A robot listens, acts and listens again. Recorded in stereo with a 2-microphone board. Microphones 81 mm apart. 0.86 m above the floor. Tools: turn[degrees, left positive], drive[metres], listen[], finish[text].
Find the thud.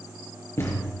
Thought: The thud: about 35° left or 145° left.
Action: turn[35]
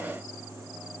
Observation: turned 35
Action: listen[]
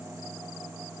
Action: finish[I heard a thud, but can't make it out now. It was about straight ahead or 110° left.]